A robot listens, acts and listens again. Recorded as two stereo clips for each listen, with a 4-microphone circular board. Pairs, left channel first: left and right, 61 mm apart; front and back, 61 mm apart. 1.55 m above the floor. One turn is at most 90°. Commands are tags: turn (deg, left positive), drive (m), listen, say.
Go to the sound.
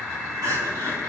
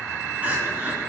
<turn deg="-90"/>
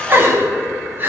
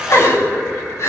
<turn deg="-35"/>
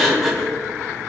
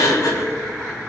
<drive m="1.0"/>
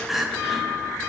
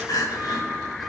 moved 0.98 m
<drive m="1.0"/>
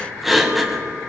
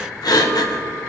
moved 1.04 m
<drive m="1.0"/>
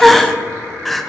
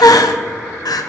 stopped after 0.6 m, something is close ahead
<say>Arrived at the crying, straight ahead.</say>